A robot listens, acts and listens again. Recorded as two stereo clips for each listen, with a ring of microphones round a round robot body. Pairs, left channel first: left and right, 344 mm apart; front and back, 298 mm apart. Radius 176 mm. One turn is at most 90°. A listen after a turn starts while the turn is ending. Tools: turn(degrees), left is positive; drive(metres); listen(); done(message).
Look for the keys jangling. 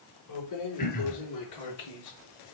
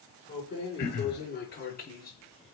turn(degrees=60)
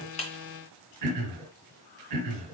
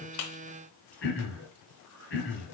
listen()
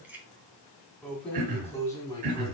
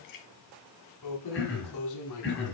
turn(degrees=10)
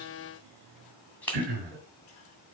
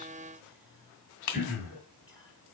done("Found it: keys jangling, straight ahead.")